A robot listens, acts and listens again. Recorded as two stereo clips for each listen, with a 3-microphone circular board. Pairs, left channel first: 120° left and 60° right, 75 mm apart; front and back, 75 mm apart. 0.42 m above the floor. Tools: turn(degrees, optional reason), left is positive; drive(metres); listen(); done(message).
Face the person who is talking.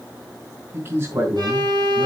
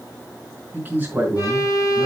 turn(degrees=-115, reason="The man speaking: 115° right.")
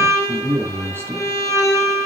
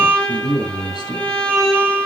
done("Found it: a man speaking, straight ahead.")